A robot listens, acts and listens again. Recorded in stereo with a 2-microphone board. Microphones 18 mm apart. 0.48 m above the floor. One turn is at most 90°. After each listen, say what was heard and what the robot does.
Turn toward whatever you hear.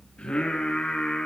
Turn 90° left.
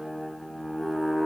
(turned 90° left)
Found it: singing, straight ahead, over 4 m away.